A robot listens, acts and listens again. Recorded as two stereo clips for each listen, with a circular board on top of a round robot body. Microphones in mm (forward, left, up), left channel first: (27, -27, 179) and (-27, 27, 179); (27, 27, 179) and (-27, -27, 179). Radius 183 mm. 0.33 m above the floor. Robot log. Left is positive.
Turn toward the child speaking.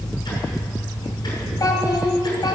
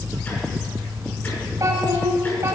note: The child speaking: 80° right.
cmd yaw -80
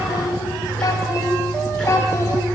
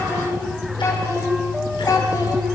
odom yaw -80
end: Facing the child speaking, 2 to 4 m away.